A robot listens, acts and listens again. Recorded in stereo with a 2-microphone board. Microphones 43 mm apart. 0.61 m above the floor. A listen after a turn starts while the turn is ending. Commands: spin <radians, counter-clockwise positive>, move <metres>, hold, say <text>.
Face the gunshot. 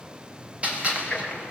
spin -0.52
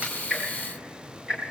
hold
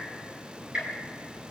say I heard a gunshot, but can't make it out now. It was about straight ahead or 120° right.